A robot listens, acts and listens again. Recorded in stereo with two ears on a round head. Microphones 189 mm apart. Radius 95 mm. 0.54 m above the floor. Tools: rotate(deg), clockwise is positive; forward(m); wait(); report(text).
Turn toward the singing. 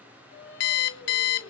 rotate(-55)
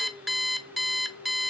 rotate(-80)
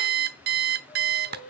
rotate(-40)
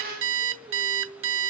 report("Found it: singing, straight ahead.")